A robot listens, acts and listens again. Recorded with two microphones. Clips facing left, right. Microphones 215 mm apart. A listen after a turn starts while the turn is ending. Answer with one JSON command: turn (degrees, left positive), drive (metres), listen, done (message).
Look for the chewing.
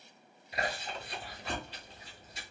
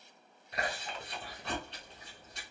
{"turn": 30}
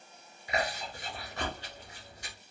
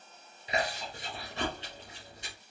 {"turn": -25}
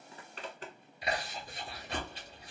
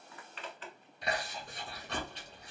{"done": "Facing the chewing, 1 to 2 m away."}